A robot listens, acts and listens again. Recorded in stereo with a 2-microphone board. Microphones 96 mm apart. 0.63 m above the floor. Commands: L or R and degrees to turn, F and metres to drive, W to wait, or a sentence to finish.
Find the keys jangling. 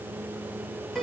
W
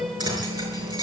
R45
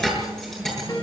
Found it: keys jangling, straight ahead.